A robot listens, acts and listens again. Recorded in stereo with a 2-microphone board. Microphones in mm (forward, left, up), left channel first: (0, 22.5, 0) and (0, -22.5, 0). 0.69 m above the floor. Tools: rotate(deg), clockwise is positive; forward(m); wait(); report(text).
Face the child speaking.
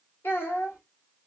rotate(-70)
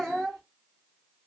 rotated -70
rotate(-10)
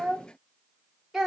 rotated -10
report("Found it: a child speaking, straight ahead, 1 to 2 m away.")